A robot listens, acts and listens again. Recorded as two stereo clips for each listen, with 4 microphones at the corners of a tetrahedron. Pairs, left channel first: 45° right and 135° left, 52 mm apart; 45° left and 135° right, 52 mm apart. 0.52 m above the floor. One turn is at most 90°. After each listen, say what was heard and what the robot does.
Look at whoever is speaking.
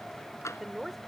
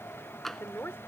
The woman speaking: 45° left. Turn 45° left.
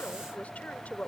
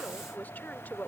Found it: a woman speaking, straight ahead.